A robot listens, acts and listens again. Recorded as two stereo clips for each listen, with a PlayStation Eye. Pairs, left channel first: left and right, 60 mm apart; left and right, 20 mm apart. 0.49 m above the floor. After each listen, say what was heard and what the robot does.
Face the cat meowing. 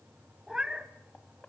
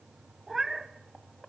Turn 30° right.
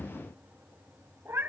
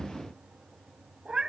So it is at 135° right. Turn 135° right.
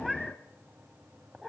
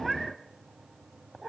Facing the cat meowing, 1 to 2 m away.